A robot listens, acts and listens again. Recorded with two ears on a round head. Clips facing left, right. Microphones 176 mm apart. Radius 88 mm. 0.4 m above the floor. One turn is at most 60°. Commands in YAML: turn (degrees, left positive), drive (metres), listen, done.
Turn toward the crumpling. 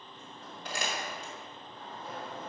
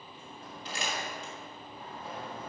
turn: 45
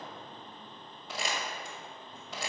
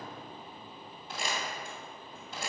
turn: 60
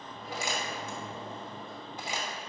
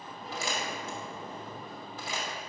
turn: 20
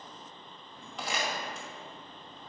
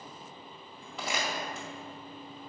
done: "Facing the crumpling, 1 to 2 m away."